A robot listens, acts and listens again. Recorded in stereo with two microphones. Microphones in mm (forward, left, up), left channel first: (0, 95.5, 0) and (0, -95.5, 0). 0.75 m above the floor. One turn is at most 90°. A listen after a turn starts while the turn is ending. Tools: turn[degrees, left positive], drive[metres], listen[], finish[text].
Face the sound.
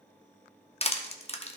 Thought: The crushing: about 35° left or 145° left.
Action: turn[35]
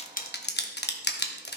Thought: So it is at 110° left.
Action: turn[90]
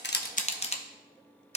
Thought: The crushing is now 35° left.
Action: turn[35]
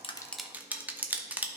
Thought: The crushing is now 10° right.
Action: turn[-10]
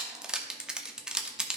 Action: finish[Facing the crushing.]